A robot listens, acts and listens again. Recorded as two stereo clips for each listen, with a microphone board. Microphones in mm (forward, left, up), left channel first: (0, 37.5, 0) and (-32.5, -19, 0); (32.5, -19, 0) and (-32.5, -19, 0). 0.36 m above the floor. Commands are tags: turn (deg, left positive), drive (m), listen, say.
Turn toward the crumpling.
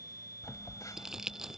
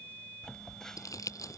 <turn deg="-40"/>
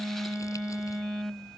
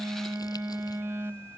<listen/>
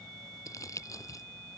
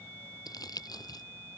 <turn deg="20"/>
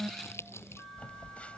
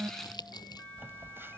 <turn deg="10"/>
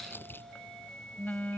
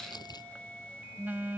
<say>Found it: crumpling, straight ahead.</say>